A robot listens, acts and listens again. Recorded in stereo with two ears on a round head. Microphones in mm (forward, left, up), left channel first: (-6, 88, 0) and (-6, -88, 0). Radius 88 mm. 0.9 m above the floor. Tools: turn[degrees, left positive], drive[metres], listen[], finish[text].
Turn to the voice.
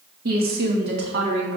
Thought: The woman speaking: about 65° right or 115° right.
Action: turn[-65]
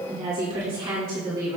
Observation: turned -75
Thought: So it is at 20° right.
Action: turn[-20]
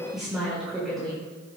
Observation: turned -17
Action: finish[Facing the woman speaking, 2 to 4 m away.]